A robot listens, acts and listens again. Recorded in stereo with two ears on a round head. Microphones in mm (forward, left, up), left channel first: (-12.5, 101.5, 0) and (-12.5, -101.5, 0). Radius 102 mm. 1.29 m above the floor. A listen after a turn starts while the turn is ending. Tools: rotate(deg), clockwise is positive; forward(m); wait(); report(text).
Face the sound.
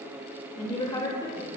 rotate(-15)
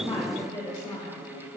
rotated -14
rotate(-15)
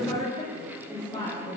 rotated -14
rotate(-20)
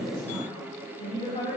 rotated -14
rotate(-30)
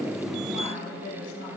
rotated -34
rotate(-120)
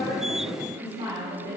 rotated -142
rotate(25)
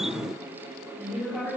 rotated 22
report("Facing the woman speaking, over 4 m away.")